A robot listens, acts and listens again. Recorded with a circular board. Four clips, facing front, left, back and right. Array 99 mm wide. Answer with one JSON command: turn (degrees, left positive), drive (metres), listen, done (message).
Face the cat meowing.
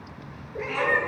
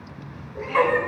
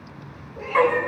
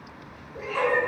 {"done": "Facing the cat meowing, 1 to 2 m away."}